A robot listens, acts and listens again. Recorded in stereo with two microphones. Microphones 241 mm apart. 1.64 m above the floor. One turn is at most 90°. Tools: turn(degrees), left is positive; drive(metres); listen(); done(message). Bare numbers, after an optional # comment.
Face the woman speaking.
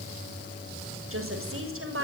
# The woman speaking: about 60° right or 120° right.
turn(-60)
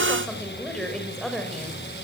done("Found it: a woman speaking, straight ahead, over 4 m away.")